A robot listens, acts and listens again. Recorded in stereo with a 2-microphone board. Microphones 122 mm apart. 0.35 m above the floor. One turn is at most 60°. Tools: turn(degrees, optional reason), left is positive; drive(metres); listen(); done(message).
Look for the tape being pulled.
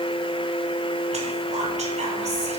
listen()
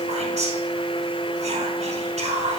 listen()
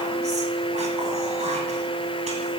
done("I can't make out tape being pulled to turn to.")